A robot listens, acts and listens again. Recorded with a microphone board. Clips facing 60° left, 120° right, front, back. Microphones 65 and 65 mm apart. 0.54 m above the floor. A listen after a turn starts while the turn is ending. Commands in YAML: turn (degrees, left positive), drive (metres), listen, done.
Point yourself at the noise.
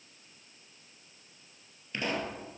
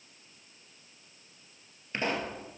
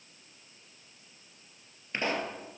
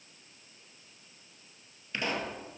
turn: -65
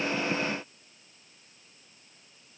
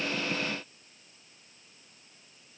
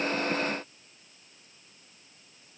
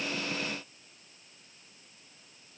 done: "Facing where the pop came from. I can't hear it now."